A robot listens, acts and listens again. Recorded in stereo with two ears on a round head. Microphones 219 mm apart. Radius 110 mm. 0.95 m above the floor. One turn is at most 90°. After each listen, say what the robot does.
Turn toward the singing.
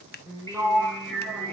Turn 30° left.
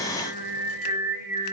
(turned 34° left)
Turn 90° left.
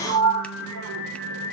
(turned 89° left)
Turn 60° left.
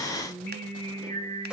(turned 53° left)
Turn 10° left.
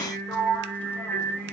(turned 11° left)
Facing the singing.